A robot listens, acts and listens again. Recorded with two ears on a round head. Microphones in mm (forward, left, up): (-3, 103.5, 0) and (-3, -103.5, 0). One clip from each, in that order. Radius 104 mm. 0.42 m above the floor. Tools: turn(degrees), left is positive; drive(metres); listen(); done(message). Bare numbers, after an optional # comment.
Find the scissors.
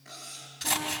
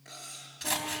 turn(30)
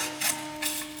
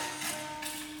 # So it is at 150° left.
turn(150)
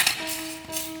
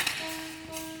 # The scissors is now 35° left.
turn(35)
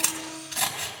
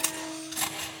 # The scissors is now 15° left.
turn(15)
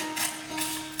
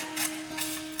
done("Facing the scissors.")